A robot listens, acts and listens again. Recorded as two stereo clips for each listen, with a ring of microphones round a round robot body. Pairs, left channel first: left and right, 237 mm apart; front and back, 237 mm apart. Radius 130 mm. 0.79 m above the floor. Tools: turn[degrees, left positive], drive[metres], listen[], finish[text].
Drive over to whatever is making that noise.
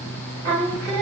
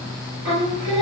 Thought: The singing: 100° right.
Action: turn[-100]
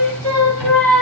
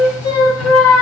Action: drive[1.0]
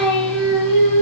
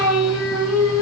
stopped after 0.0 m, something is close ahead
Action: finish[Blocked. The singing is further on, straight ahead.]